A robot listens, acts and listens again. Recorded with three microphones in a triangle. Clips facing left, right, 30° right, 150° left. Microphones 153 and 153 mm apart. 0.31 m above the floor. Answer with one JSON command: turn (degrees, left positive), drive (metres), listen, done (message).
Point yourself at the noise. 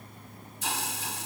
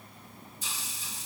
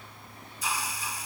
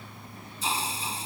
{"turn": 90}
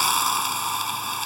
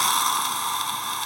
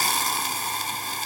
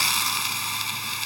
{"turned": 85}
{"done": "Found it: a hiss, straight ahead."}